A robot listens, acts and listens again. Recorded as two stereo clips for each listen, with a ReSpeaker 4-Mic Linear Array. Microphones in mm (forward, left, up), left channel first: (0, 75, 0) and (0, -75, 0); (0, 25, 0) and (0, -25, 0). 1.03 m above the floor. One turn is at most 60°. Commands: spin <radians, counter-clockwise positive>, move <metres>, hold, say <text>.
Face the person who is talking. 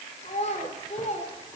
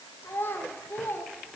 spin 0.87
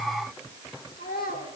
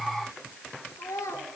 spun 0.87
spin 1.05
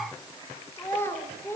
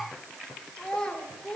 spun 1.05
spin 0.26
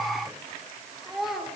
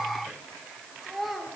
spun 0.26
say Found it: a child speaking, straight ahead, 2 to 4 m away.